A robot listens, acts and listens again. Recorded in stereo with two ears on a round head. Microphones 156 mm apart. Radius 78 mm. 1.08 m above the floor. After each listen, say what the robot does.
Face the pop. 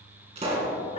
Turn 35° right.
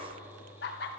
Keep listening.
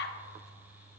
I heard a pop, but can't make it out now. It was about straight ahead or 110° right.